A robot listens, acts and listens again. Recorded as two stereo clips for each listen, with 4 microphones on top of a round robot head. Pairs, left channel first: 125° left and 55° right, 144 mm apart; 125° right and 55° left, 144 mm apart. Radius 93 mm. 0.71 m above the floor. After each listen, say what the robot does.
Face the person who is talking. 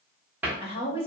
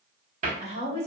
Turn 80° left.
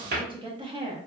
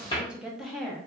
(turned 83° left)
Turn 40° right.
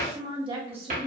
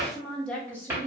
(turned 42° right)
Turn 55° right.
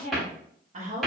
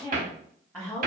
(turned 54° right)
Turn 30° right.
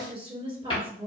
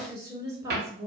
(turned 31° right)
Found it: a woman speaking, straight ahead, 1 to 2 m away.